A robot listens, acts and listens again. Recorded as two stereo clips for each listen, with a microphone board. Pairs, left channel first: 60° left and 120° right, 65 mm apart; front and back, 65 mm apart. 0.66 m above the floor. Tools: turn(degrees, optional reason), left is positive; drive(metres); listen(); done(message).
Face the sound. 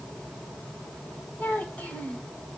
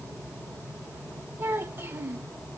turn(degrees=125, reason="The child speaking: 125° left.")
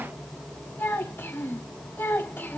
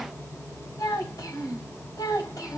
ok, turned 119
done("Found it: a child speaking, straight ahead, 2 to 4 m away.")